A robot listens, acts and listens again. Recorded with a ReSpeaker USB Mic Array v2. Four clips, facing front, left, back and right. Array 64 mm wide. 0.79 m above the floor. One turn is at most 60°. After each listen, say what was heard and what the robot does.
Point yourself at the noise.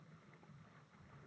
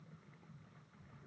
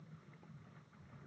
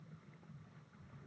Keep listening.
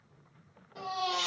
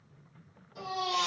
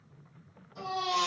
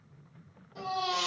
The baby crying: 10° right. Turn 10° right.
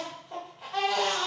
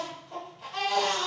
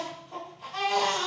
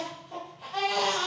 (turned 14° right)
Facing the baby crying.